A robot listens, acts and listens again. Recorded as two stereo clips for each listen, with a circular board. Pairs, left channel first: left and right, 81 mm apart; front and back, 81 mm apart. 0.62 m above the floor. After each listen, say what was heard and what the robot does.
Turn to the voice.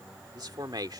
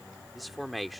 The man speaking: 90° right. Turn 90° right.
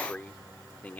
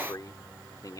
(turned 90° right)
The man speaking is now 25° left. Turn 25° left.
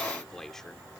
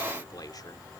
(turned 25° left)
The man speaking is now 10° left. Turn 10° left.
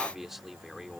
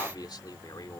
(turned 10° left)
Facing the man speaking.